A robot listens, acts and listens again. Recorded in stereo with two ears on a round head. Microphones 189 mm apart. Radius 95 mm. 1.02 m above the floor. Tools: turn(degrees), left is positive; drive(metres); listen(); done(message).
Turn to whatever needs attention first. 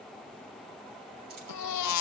turn(degrees=90)
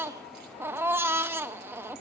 turn(degrees=-10)
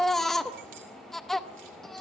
done("Facing the baby crying, under 1 m away.")